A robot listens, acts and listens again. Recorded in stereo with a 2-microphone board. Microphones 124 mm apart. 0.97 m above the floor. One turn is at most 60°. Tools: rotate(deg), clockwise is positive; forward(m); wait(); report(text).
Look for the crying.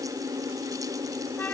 wait()
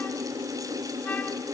wait()
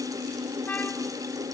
report("I can't make out crying.")